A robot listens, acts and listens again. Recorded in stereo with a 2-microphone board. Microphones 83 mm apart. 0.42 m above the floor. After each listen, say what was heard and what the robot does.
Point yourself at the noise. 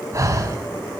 The breathing: about 40° right or 140° right. Turn 40° right.
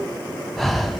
Facing the breathing, under 1 m away.